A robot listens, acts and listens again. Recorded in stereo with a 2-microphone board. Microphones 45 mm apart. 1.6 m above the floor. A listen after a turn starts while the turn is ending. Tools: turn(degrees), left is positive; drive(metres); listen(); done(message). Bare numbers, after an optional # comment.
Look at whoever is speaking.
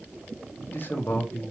# The man speaking: about 45° left or 135° left.
turn(45)
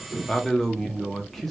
done("Facing the man speaking, under 1 m away.")